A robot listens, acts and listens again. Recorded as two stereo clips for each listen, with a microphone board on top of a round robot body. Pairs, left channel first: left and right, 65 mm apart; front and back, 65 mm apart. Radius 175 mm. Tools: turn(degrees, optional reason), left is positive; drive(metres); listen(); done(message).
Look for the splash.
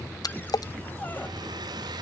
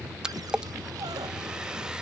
turn(degrees=100, reason="The splash: 100° left.")
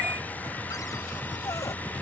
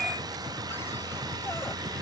done("I heard a splash from this way, but can't make it out now.")